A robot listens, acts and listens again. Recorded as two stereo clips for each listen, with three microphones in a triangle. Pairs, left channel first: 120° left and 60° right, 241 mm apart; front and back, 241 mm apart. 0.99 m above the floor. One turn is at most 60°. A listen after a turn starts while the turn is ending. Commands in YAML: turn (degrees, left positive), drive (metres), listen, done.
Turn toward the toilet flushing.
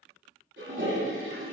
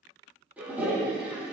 turn: -60
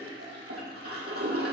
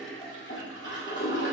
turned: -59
turn: -40
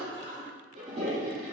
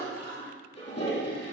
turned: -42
done: "Facing the toilet flushing, 2 to 4 m away."